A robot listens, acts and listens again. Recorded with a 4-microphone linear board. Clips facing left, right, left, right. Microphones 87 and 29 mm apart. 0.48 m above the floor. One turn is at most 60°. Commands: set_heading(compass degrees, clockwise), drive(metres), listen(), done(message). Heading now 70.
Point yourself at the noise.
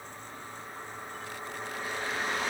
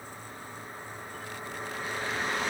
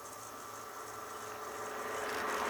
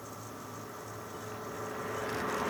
listen()
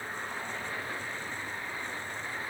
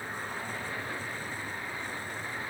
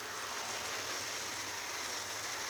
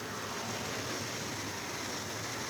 listen()
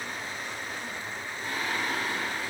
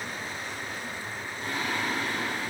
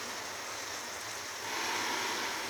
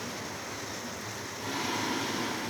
set_heading(130)
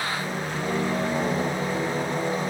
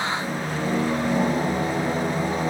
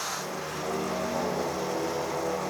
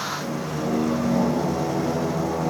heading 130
set_heading(180)
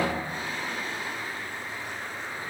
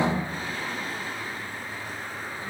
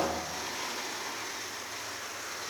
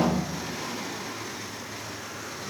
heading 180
set_heading(165)
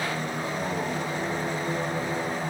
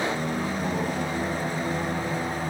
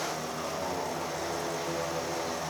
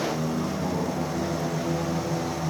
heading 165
done("Found it: singing, straight ahead.")